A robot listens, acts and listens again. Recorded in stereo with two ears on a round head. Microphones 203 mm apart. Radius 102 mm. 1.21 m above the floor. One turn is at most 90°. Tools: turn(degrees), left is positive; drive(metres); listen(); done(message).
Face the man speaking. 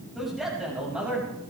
turn(degrees=-30)
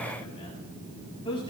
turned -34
turn(degrees=25)
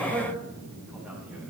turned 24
done("Found it: a man speaking, straight ahead, over 4 m away.")